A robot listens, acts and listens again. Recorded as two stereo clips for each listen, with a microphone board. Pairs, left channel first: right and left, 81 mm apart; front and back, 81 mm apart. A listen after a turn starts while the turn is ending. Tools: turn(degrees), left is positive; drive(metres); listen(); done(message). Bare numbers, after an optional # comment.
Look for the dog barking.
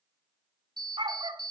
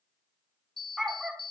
# The dog barking: 90° left.
turn(90)
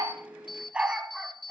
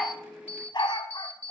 # The dog barking is now 10° left.
turn(10)
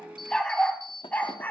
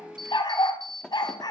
# The dog barking is now 25° right.
turn(-25)
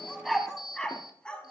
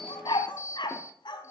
# The dog barking is now 15° right.
turn(-15)
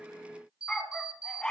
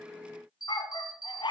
# The dog barking is now 10° right.
turn(-10)
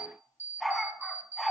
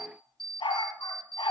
done("Facing the dog barking, 1 to 2 m away.")